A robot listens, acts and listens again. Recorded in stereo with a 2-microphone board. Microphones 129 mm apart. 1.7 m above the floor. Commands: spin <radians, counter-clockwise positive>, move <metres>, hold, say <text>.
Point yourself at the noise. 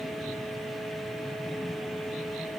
hold
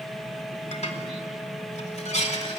spin 1.13
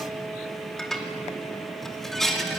say Found it: dishes clattering, straight ahead, 2 to 4 m away.